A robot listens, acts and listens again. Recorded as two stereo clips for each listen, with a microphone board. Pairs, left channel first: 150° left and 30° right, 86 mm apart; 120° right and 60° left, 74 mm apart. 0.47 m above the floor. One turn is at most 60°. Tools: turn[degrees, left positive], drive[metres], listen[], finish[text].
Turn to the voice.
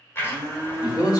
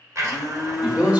Thought: The man speaking: 130° left.
Action: turn[60]
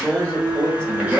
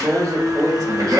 Thought: The man speaking is now 75° left.
Action: turn[60]
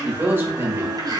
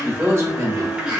Thought: The man speaking is now 25° left.
Action: turn[25]
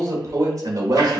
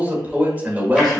Action: finish[Found it: a man speaking, straight ahead, 1 to 2 m away.]